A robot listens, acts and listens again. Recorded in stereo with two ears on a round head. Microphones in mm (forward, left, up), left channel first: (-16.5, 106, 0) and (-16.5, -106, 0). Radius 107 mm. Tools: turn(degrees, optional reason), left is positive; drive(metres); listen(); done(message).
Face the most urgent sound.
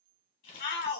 turn(degrees=50, reason="The shout: about 50° left or 130° left.")
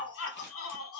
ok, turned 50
turn(degrees=75, reason="So it is at 75° left.")
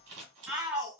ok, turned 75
turn(degrees=-15, reason="The shout is now 15° right.")
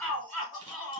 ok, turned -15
done("Facing the shout.")